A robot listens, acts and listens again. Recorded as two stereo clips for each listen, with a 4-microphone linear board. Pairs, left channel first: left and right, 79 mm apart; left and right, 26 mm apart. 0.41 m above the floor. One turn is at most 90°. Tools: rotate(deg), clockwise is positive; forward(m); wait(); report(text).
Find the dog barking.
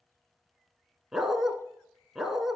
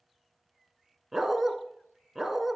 rotate(30)
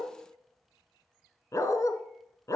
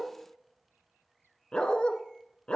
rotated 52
rotate(-45)
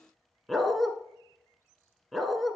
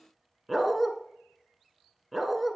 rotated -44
report("Facing the dog barking, 1 to 2 m away.")